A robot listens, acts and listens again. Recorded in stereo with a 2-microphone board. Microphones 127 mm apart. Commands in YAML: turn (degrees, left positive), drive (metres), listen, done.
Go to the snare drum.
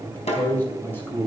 turn: 60
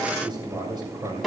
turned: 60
drive: 1.0
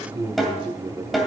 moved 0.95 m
drive: 1.0
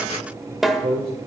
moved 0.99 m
drive: 1.0
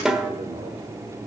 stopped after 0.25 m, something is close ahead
done: "I am next to the snare drum."